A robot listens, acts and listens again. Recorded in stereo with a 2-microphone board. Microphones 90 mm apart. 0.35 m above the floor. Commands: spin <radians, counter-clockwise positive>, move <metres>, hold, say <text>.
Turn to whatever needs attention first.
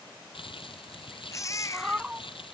spin 0.61
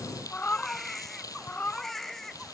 say Facing the baby crying.